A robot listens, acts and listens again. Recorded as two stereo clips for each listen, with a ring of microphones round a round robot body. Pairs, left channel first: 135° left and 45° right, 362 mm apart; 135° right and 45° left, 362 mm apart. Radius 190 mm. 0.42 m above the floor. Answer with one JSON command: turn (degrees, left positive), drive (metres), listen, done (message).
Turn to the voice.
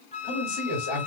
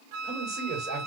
{"turn": 135}
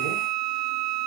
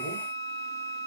{"listen": true}
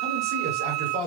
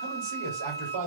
{"done": "Facing the man speaking, 2 to 4 m away."}